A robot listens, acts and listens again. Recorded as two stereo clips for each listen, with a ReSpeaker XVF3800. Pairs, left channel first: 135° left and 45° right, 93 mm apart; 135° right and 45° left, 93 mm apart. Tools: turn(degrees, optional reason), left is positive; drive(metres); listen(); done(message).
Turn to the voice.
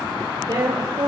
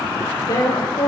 turn(degrees=-85, reason="The woman speaking: 85° right.")
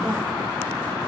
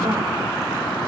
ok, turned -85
listen()
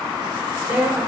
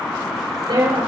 turn(degrees=25, reason="The woman speaking is now 25° left.")
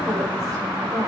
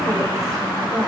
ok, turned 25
done("Facing the woman speaking, over 4 m away.")